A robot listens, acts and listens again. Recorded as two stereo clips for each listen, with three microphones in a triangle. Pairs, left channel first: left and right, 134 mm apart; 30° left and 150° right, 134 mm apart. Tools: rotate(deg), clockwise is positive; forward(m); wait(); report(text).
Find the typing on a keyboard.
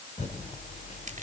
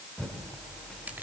rotate(-115)
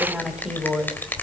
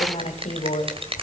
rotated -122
report("Facing the typing on a keyboard, 2 to 4 m away.")